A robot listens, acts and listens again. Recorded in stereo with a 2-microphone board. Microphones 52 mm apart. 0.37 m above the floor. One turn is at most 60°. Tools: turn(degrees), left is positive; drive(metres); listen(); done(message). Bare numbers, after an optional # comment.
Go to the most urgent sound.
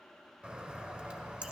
listen()
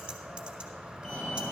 turn(30)
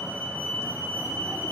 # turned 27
# So it is at 135° left.
turn(60)
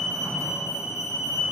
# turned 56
# The fire alarm is now 80° left.
turn(60)
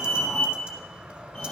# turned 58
# The fire alarm is now 20° left.
turn(20)
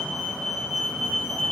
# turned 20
drive(1.0)
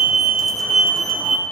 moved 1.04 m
drive(1.0)
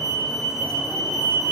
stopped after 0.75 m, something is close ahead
# The fire alarm is now 10° left.
turn(10)
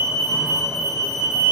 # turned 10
done("Arrived at the fire alarm, straight ahead.")